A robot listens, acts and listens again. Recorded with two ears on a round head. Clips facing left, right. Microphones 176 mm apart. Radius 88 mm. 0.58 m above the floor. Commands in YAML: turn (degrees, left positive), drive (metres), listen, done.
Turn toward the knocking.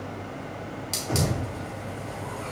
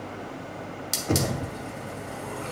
turn: -70
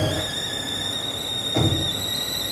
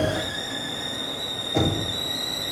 done: "Facing the knocking."